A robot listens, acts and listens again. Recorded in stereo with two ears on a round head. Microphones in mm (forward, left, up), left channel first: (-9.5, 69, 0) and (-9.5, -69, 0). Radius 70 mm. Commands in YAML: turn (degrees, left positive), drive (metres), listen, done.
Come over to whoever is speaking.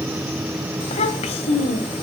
turn: 45
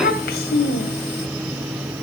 turn: 85
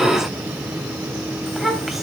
drive: 1.0
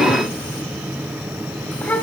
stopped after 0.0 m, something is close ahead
turn: 10
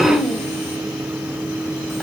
done: "Something is in my way. I am facing the child speaking but have not reached it."